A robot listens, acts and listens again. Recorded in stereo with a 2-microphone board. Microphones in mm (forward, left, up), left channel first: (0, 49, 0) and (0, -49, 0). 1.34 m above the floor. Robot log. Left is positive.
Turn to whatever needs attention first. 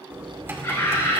note: The scream: about 30° left or 150° left.
cmd yaw +30
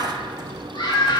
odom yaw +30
note: So it is at 120° left.
cmd yaw +120
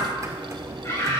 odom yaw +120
note: The scream is now 30° left.
cmd yaw +30
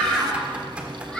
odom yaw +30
note: The scream is now 10° left.
cmd yaw +10
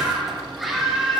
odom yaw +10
end: Found it: a scream, straight ahead, over 4 m away.